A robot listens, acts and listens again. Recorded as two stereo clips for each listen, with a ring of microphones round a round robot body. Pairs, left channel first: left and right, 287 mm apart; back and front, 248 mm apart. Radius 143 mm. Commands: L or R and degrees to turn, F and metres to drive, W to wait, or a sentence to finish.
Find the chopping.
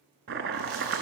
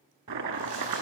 R35
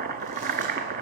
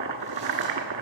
R30
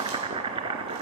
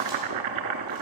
R15
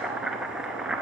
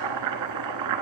Facing the chopping.